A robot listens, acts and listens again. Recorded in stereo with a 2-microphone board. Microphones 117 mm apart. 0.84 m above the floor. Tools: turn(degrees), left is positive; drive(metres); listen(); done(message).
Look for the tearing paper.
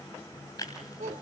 turn(degrees=30)
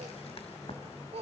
listen()
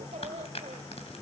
turn(degrees=120)
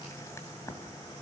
listen()
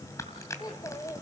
turn(degrees=25)
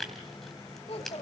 done("Facing the tearing paper, 2 to 4 m away.")